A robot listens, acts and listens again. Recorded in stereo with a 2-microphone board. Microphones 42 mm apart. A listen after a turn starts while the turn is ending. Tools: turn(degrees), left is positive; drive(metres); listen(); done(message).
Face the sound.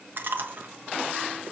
turn(degrees=-50)
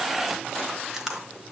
turn(degrees=-15)
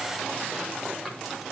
done("Found it: chewing, straight ahead.")